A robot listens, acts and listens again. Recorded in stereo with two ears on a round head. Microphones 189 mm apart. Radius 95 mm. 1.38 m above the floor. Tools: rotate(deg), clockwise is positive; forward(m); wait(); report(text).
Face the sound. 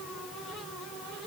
wait()
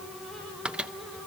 rotate(30)
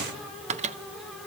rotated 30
rotate(145)
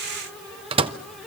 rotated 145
rotate(25)
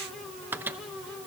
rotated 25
rotate(10)
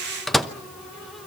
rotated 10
report("Found it: a microwave, straight ahead, under 1 m away.")